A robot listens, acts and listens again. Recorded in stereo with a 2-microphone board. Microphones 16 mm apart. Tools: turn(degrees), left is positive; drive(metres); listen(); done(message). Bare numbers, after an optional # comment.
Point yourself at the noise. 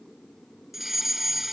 # The fire alarm: about 15° right or 165° right.
turn(-15)
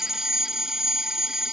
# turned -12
# So it is at 150° right.
turn(-150)
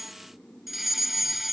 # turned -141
# The fire alarm is now 10° right.
turn(-10)
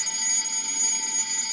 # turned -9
done("Facing the fire alarm.")